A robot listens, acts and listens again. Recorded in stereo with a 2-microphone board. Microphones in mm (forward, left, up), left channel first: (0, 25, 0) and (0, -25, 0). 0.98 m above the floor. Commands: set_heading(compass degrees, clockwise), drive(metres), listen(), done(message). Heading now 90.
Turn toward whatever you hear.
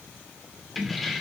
set_heading(60)
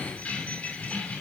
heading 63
set_heading(273)
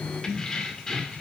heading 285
set_heading(275)
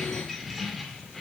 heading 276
done("Facing the keys jangling, 2 to 4 m away.")